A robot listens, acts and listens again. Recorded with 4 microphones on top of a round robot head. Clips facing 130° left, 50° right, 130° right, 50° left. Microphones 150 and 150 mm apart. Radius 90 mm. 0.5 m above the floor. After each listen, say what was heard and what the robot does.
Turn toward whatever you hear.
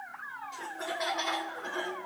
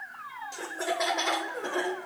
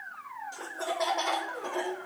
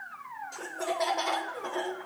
The laughter: 50° right. Turn 50° right.
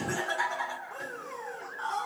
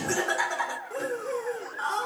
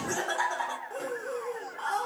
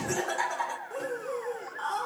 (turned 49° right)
The laughter is now 50° right. Turn 50° right.
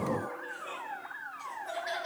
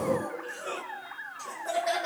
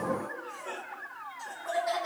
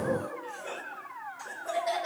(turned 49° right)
The laughter is now 15° right. Turn 15° right.
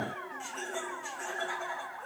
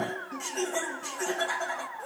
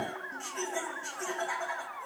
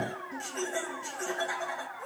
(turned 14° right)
Facing the laughter, 2 to 4 m away.